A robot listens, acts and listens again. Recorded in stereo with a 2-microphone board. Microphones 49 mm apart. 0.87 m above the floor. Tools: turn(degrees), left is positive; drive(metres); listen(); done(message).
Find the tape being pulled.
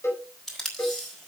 turn(degrees=30)
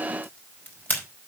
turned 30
turn(degrees=145)
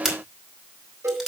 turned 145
done("Found it: tape being pulled, straight ahead, over 4 m away.")